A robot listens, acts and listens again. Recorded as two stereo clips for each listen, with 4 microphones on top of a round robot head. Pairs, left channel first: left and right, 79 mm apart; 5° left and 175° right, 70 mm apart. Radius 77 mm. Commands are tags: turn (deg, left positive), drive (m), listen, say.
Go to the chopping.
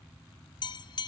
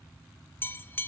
<listen/>
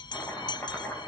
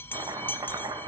<turn deg="155"/>
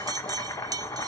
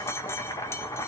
<turn deg="40"/>
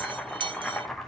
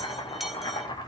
<drive m="1.0"/>
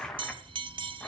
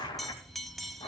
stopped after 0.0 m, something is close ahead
<say>Something is in my way. I am facing the chopping but have not reached it.</say>